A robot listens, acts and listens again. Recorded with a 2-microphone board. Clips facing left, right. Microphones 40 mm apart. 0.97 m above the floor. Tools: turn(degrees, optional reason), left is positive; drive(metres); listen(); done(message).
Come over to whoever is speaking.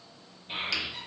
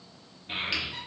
turn(degrees=-45, reason="The child speaking: about 45° right or 135° right.")
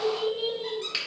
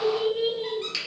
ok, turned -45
turn(degrees=-90, reason="So it is at 90° right.")
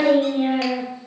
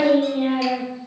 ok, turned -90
drive(metres=1.0)
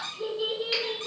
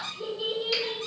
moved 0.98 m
turn(degrees=10, reason="The child speaking is now 10° left.")
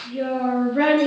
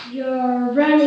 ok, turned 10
drive(metres=1.0)
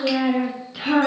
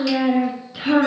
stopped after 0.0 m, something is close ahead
done("Arrived at the child speaking, straight ahead.")